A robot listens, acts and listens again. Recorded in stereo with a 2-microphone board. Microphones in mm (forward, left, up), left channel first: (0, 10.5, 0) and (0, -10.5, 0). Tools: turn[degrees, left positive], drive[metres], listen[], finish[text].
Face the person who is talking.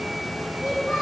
Thought: The child speaking: about 40° right or 140° right.
Action: turn[-40]
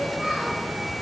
Action: listen[]
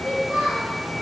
Thought: So it is at 100° right.
Action: turn[-100]
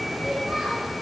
Action: finish[Found it: a child speaking, straight ahead, 2 to 4 m away.]